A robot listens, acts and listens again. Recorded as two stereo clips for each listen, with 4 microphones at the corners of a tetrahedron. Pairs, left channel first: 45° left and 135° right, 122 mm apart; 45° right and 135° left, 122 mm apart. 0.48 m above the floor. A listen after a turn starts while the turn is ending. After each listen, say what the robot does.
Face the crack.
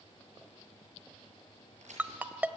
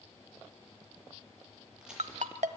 Turn 140° right.
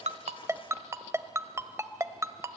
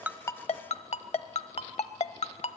Facing where the crack came from. I can't hear it now.